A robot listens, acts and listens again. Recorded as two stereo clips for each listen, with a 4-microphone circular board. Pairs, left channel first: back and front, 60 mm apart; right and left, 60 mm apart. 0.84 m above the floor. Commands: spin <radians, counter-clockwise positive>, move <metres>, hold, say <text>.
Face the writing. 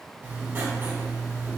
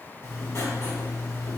spin -0.79
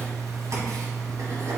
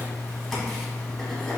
say Found it: writing, straight ahead, 1 to 2 m away.